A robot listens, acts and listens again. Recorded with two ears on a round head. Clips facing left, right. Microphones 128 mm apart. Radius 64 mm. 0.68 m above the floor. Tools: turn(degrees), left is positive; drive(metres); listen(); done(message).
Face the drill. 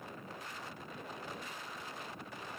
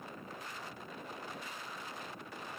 listen()
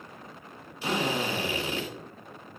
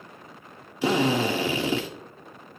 turn(degrees=-60)
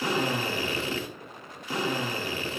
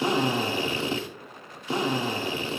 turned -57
turn(degrees=-25)
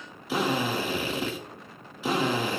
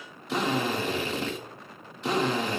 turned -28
done("Found it: a drill, straight ahead, 1 to 2 m away.")